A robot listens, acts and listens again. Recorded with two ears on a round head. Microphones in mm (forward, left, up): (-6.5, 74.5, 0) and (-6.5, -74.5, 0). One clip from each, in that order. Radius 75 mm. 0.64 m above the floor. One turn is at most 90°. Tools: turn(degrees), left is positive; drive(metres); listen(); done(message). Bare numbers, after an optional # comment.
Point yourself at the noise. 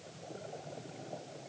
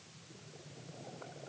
listen()
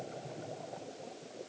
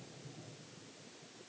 listen()
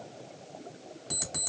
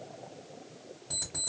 # The alarm clock: about 55° left or 125° left.
turn(55)
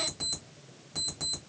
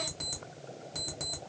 done("Facing the alarm clock, 1 to 2 m away.")